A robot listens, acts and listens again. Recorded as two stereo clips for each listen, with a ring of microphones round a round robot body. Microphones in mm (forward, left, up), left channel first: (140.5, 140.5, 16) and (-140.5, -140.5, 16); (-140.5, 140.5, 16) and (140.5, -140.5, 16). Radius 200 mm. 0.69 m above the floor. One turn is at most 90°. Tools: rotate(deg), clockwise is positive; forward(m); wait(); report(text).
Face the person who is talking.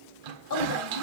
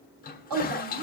report("Facing the woman speaking, over 4 m away.")